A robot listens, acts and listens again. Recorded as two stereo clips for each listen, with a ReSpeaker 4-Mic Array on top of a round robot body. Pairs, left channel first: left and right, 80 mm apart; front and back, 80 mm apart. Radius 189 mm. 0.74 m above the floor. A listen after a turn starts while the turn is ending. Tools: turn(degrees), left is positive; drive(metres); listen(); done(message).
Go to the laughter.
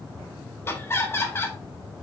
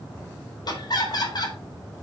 turn(degrees=30)
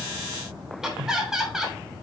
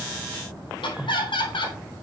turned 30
drive(metres=1.0)
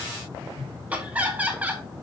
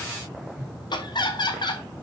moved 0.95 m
turn(degrees=-20)
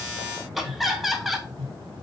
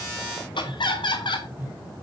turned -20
drive(metres=1.0)
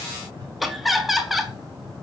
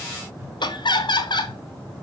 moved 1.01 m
drive(metres=1.0)
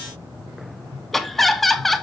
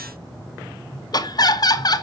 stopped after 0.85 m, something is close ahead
done("Arrived at the laughter, straight ahead.")